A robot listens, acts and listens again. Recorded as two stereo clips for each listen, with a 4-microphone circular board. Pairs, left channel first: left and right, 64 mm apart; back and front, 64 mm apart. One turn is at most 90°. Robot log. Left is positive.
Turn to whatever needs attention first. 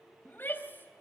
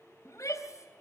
note: The shout: 145° left.
cmd yaw +90
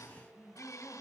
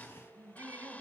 note: The shout is now 40° left.
cmd yaw +40
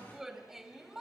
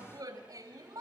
end: Facing the shout, 2 to 4 m away.